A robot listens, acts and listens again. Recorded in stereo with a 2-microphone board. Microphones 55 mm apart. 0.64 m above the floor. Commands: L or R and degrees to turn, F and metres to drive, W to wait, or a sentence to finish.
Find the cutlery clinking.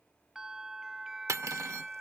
R75
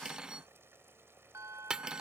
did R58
R20
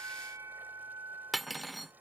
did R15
Facing the cutlery clinking.